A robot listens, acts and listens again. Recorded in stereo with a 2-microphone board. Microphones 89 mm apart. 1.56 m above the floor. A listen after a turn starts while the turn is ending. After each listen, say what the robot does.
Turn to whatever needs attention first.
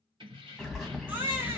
Turn 20° right.
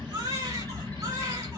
Turn 135° right.
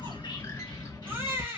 Turn 25° right.
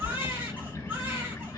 Turn 20° right.
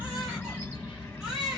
Turn 10° right.
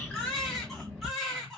Facing the baby crying.